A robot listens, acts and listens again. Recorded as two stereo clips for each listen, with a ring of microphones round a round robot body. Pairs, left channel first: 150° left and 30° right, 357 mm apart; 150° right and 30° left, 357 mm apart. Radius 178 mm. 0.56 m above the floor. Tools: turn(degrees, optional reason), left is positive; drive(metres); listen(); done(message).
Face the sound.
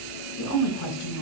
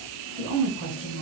turn(degrees=100, reason="The woman speaking: 100° left.")
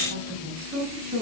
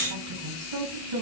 turn(degrees=35, reason="The woman speaking is now 35° left.")
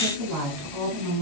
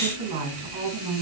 turn(degrees=10, reason="The woman speaking is now 10° left.")
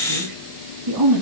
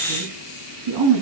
done("Found it: a woman speaking, straight ahead.")